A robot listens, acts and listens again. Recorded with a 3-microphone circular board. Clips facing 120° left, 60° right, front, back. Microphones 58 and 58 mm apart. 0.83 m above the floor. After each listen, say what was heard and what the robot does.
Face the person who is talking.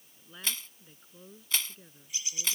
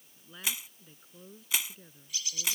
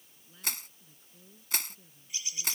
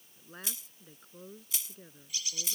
The woman speaking: 150° right. Turn 150° right.
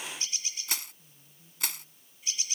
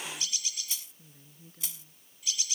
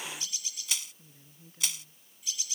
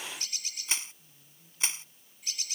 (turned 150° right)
The woman speaking is now 45° right. Turn 45° right.
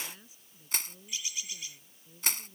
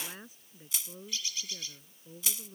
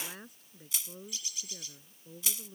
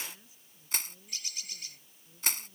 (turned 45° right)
The woman speaking is now 20° right. Turn 20° right.
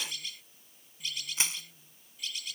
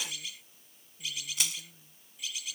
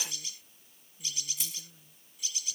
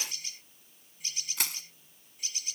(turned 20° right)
Found it: a woman speaking, straight ahead.